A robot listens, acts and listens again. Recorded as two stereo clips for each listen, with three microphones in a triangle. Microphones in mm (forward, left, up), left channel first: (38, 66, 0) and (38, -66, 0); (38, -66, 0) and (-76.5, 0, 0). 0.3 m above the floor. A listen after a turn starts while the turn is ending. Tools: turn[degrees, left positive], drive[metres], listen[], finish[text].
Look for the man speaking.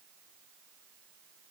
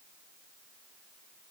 Action: listen[]
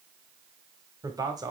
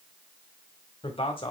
Thought: The man speaking: 45° right.
Action: turn[-45]
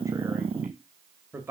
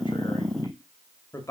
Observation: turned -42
Thought: The man speaking is now 45° right.
Action: turn[-45]
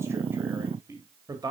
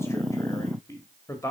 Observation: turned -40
Thought: The man speaking is now 75° right.
Action: turn[-75]
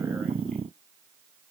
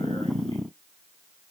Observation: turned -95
Thought: Nothing new. It was at 20° left.
Action: turn[20]
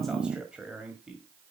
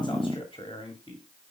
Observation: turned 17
Thought: The man speaking is now 10° right.
Action: turn[-10]
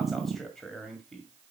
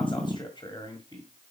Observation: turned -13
Action: finish[Facing the man speaking, 1 to 2 m away.]